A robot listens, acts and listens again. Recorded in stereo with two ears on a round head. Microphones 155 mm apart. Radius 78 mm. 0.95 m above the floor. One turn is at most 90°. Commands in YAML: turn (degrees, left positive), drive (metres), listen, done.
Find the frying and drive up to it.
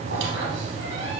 listen: true
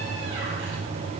listen: true
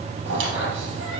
done: "I can't make out frying, only a squeak."